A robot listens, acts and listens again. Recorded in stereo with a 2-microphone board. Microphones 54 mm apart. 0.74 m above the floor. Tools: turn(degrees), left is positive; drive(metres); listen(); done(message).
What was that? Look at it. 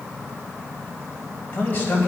turn(degrees=30)
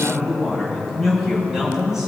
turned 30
turn(degrees=-10)
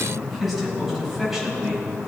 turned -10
done("Found it: a man speaking, straight ahead, over 4 m away.")